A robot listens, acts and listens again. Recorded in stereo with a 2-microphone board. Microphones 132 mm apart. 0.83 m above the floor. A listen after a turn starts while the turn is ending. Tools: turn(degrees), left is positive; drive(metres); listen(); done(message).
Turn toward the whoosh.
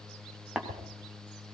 turn(degrees=-70)
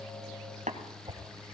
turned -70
turn(degrees=-30)
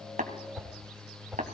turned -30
done("Found it: a whoosh, straight ahead.")